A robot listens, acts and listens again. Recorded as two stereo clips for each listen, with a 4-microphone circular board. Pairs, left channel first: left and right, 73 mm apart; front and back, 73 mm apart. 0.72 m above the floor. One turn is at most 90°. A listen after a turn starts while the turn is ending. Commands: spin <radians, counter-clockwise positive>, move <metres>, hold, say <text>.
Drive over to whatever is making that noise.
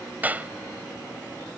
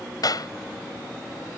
spin -0.44
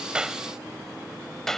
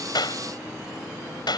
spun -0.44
move 1.0
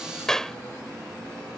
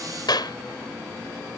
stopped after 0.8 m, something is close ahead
say Blocked. The clap is further on, straight ahead.